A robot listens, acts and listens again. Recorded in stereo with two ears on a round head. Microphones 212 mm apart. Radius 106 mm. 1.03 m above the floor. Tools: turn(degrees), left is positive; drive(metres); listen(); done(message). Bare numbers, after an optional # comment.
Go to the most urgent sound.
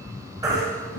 # The baby crying: about 15° right or 165° right.
turn(-15)
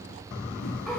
listen()
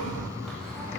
listen()
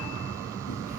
done("I heard a baby crying, but can't make it out now. It was about straight ahead or 150° right. I did not reach it.")